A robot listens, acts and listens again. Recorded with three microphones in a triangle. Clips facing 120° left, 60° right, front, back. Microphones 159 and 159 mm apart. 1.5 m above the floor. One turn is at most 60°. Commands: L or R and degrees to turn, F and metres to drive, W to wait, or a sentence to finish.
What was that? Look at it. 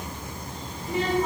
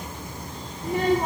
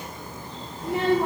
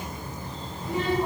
R25
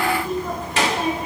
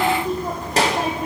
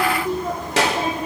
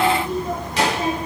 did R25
R10
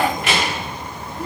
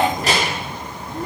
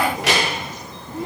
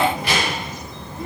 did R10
R10
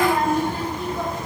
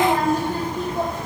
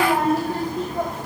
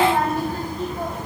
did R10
R15
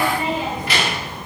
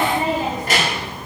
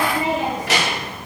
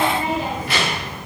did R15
R15
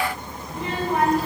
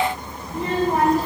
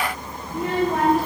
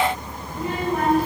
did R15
R10
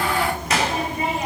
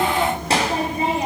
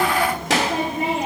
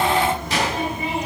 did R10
Found it: a child speaking, straight ahead, 2 to 4 m away.